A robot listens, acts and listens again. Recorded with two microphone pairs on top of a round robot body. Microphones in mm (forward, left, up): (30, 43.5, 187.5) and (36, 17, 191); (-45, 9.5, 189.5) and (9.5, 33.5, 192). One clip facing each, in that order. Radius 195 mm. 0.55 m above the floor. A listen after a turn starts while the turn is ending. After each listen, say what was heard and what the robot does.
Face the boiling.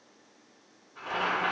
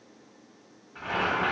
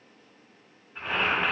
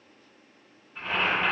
The boiling: 80° right. Turn 80° right.
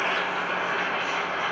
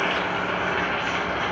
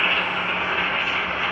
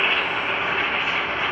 The boiling is now 30° right. Turn 30° right.
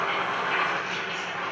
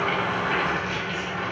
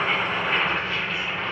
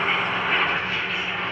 Facing the boiling.